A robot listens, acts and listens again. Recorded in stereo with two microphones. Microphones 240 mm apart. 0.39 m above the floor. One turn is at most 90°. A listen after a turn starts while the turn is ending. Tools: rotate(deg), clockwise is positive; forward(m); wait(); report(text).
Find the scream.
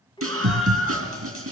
rotate(65)
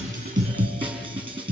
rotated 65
report("Facing the scream, 2 to 4 m away.")